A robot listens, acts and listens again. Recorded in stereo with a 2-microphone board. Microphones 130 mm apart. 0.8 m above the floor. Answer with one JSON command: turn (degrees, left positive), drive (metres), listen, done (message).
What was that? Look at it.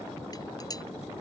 {"turn": 30}
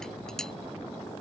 {"listen": true}
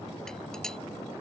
{"listen": true}
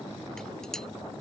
{"done": "Found it: dishes clattering, straight ahead."}